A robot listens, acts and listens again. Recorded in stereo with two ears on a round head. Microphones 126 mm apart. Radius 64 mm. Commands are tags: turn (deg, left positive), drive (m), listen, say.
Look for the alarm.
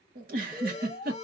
<turn deg="50"/>
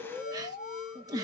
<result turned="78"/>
<turn deg="55"/>
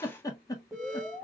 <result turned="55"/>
<say>Found it: an alarm, straight ahead, 1 to 2 m away.</say>